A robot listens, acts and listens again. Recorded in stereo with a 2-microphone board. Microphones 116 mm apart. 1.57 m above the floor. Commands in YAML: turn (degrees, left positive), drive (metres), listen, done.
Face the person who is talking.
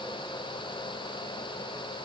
listen: true
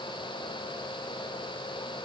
listen: true
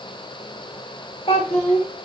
turn: 65
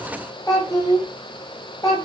turn: 40
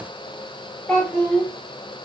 turn: 10
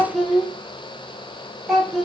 done: "Found it: a child speaking, straight ahead, 1 to 2 m away."